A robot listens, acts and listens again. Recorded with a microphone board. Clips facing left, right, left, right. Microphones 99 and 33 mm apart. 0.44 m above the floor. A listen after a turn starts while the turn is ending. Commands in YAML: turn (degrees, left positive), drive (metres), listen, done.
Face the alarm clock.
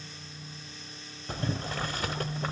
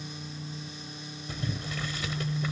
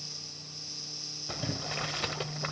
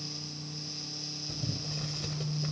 listen: true
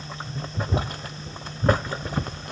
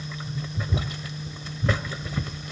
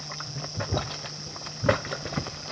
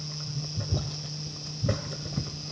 listen: true
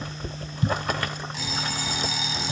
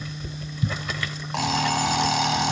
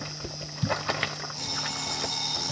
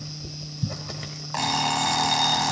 turn: -70
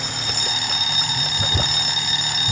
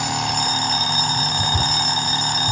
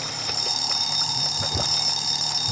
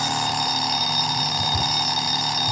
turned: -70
turn: -35
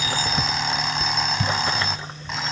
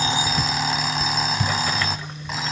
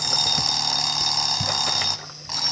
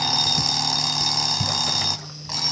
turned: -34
done: "Found it: an alarm clock, straight ahead, 1 to 2 m away."